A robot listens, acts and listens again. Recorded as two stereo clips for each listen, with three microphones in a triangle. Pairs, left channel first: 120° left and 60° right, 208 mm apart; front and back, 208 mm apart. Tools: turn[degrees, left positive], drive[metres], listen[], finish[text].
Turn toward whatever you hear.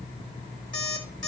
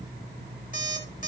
Thought: The alarm clock: 45° right.
Action: turn[-45]
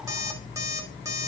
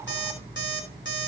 Thought: The alarm clock is now 15° left.
Action: turn[15]
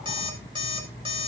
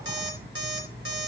Action: finish[Facing the alarm clock.]